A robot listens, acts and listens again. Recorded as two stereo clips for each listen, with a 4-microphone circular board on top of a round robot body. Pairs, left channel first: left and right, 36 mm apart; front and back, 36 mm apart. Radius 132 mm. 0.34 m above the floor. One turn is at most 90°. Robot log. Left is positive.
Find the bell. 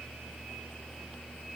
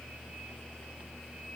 cmd idle
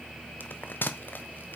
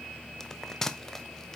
note: The bell: 75° left.
cmd yaw +75
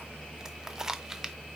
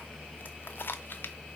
note: The bell is now 15° right.
cmd yaw -15
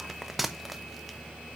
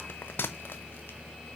end: Found it: a bell, straight ahead.